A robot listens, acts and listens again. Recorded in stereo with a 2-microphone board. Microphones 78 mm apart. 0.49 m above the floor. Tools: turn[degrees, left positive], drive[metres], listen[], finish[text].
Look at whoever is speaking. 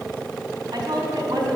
Thought: The woman speaking: about 65° right or 115° right.
Action: turn[-65]
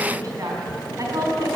Thought: So it is at 45° right.
Action: turn[-45]
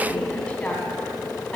Action: listen[]
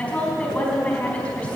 Thought: The woman speaking is now 20° left.
Action: turn[20]
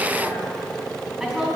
Action: finish[Facing the woman speaking.]